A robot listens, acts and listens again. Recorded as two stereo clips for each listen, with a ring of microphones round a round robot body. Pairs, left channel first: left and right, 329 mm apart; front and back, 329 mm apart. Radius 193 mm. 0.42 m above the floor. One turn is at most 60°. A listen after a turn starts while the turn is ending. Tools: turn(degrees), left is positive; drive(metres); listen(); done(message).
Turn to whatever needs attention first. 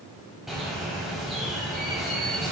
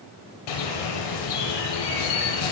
listen()
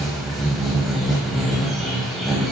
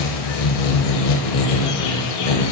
listen()
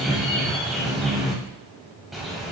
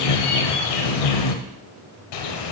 done("I can't make out anything urgent, only a bird.")